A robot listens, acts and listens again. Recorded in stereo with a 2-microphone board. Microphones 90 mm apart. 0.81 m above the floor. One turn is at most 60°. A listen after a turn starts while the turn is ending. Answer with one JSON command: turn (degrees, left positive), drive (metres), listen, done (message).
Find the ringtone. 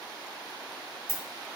{"turn": -20}
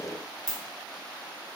{"done": "Facing the ringtone."}